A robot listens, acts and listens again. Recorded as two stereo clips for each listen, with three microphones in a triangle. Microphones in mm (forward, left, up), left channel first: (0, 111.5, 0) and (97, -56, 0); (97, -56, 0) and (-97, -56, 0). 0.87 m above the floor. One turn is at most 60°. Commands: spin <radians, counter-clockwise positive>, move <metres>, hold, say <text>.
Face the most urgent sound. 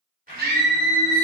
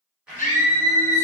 spin -0.70
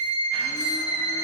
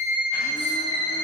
say Facing the scream, under 1 m away.